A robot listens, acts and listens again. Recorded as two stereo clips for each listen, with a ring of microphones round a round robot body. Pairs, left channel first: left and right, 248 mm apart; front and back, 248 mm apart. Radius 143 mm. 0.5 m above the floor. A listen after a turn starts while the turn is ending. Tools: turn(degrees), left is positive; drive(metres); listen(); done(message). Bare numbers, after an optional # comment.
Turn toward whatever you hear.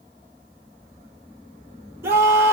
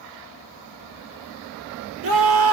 # The scream: 170° right.
turn(-170)
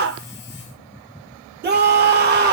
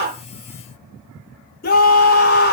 # The scream is now 50° right.
turn(-50)
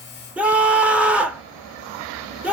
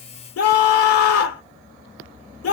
done("Facing the scream.")